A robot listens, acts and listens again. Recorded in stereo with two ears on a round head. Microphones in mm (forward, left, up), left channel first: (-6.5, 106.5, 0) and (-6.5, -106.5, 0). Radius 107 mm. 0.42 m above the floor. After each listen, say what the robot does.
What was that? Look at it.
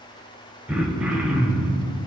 Turn 30° right.
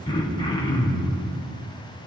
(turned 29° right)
Turn 25° left.
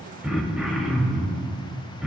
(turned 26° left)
Found it: throat clearing, straight ahead.